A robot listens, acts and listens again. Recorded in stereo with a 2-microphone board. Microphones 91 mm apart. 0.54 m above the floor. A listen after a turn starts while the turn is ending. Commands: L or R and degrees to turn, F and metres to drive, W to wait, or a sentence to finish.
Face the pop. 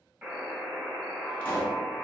L15
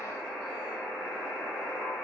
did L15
W
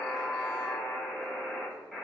I heard a pop, but can't make it out now. It was about straight ahead or 150° left.